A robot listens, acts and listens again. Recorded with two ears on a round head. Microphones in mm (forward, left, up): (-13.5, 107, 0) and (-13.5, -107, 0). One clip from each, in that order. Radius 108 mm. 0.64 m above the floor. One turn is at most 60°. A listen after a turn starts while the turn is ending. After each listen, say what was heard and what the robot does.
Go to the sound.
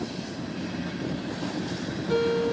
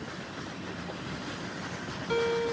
The guitar: about 35° right or 145° right. Turn 35° right.
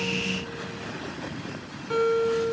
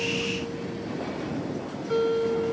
Drive 1.0 m forward.
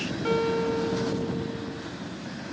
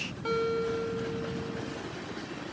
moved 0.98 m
Drive 1.0 m forward.
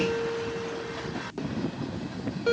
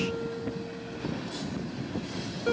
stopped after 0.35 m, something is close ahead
I am next to the guitar.